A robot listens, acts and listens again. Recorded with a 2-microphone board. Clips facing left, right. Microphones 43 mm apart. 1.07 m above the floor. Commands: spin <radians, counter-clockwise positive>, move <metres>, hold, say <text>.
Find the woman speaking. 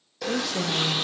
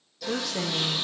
spin -0.52
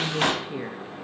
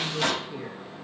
spin 0.52
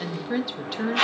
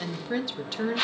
say Found it: a woman speaking, straight ahead, 1 to 2 m away.